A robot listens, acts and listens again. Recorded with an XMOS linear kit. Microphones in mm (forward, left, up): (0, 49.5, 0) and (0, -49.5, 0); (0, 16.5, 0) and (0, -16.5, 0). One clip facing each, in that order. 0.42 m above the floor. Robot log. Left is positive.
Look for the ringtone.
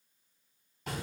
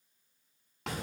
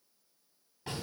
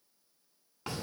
cmd idle
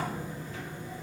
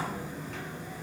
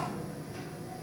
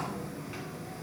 cmd idle
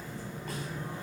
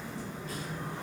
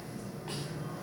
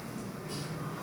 end: I can't make out a ringtone, only a sliding door.